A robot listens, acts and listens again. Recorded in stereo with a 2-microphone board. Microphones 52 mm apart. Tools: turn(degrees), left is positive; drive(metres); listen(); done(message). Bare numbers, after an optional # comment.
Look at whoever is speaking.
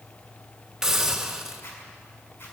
listen()
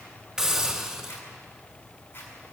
listen()
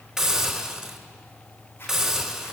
done("I can't make out anyone speaking, only a zipper and a hiss.")